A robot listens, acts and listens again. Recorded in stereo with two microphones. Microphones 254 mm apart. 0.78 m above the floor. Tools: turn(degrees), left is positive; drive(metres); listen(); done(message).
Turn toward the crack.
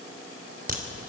turn(degrees=-35)
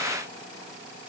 listen()
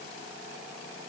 done("I heard a crack, but can't make it out now. It was about straight ahead or 110° right.")